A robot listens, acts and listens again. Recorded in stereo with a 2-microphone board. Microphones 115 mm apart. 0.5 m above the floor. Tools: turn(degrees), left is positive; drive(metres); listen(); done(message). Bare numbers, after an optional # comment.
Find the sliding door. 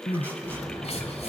# The sliding door: about 35° left or 145° left.
turn(35)
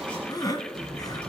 done("Facing the sliding door, over 4 m away.")